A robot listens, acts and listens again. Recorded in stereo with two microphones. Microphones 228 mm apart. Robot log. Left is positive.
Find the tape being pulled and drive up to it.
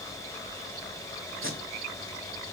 note: The tape being pulled: about 60° right or 120° right.
cmd yaw -60
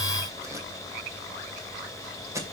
note: So it is at 15° right.
cmd yaw -15
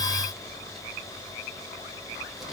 cmd idle
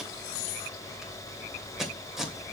cmd fwd 1.0
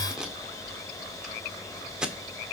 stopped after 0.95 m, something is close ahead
end: Arrived at the tape being pulled, straight ahead.